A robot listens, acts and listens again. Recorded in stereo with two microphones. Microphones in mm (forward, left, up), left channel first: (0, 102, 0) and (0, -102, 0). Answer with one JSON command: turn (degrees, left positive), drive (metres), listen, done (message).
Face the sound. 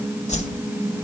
{"turn": 35}
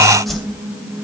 {"done": "Found it: a whoosh, straight ahead, 2 to 4 m away."}